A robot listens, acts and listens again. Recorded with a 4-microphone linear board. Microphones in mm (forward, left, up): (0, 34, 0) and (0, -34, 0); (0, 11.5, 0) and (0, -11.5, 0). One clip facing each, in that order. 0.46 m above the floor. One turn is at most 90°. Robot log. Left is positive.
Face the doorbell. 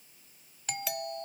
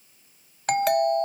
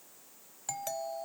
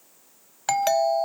note: The doorbell: about 60° right or 120° right.
cmd yaw -60
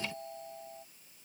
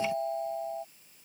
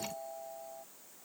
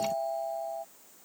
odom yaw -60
note: So it is at 50° right.
cmd yaw -50
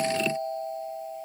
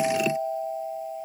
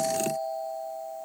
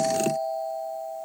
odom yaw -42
note: The doorbell is now 10° right.
cmd yaw -10
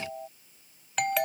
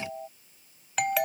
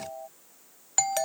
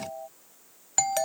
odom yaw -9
end: Found it: a doorbell, straight ahead.